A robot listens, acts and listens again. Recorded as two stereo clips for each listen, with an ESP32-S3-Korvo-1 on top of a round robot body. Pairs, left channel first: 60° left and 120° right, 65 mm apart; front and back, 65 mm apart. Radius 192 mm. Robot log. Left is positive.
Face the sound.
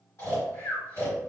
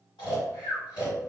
end: Facing the snoring.